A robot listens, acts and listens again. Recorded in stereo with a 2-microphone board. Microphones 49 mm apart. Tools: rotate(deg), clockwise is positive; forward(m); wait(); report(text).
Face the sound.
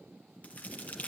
rotate(-35)
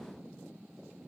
wait()
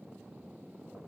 report("I heard a crack, but can't make it out now. It was about straight ahead or 110° left.")